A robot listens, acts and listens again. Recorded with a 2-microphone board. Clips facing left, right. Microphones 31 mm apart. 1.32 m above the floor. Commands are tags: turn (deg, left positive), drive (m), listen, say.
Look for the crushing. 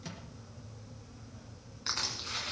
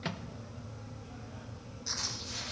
<turn deg="55"/>
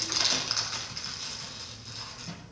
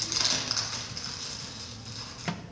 <turn deg="10"/>
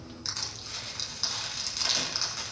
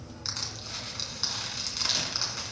<say>Found it: crushing, straight ahead.</say>